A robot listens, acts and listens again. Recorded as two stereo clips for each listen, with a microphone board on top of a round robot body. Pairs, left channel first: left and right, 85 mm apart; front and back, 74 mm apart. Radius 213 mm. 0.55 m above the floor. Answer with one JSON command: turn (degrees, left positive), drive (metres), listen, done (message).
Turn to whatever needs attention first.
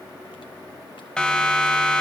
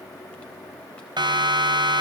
{"turn": 170}
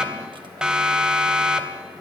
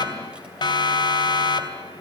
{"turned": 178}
{"done": "Facing the siren."}